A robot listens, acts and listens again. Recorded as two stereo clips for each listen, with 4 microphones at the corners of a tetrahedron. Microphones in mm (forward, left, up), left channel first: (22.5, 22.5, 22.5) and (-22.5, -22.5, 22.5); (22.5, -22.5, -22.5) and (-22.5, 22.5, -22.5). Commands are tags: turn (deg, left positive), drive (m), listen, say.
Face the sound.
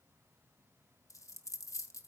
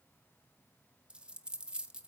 <turn deg="60"/>
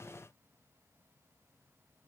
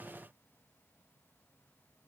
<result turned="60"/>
<say>Facing where the dropped coin came from. I can't hear it now.</say>